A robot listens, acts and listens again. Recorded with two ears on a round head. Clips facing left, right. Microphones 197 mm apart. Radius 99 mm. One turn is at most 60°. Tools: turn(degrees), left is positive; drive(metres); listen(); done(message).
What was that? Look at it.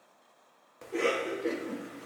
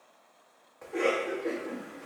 turn(degrees=40)
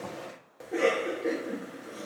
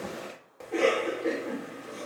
done("Found it: a cough, straight ahead.")